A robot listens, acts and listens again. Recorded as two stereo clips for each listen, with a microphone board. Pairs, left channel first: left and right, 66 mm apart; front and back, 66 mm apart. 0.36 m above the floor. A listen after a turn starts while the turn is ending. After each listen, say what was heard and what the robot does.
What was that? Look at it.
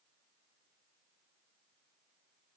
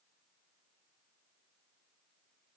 Keep listening.
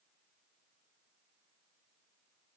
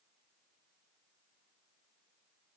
Keep listening.
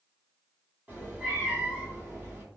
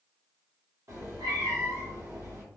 The cat meowing: 150° right. Turn 150° right.
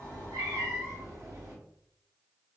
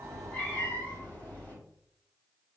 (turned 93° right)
The cat meowing is now 60° right. Turn 60° right.
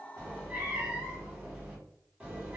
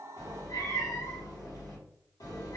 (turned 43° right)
The cat meowing is now 15° right. Turn 15° right.
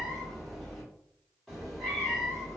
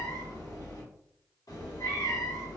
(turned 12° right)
Facing the cat meowing, 1 to 2 m away.